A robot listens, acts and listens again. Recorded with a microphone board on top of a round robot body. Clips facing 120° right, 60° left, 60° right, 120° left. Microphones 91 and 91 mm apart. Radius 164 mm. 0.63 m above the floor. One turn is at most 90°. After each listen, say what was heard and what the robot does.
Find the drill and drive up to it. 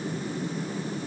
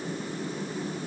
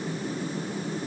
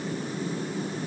Keep listening.
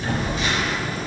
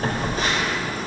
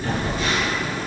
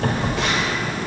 Keep listening.
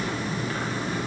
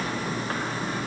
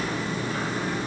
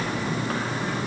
I can't make out a drill to turn to.